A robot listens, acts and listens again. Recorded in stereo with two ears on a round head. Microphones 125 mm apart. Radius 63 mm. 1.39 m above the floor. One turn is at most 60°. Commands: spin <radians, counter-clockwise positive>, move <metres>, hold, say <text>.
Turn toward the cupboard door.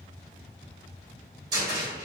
spin -0.44
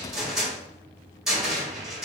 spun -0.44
say Facing the cupboard door.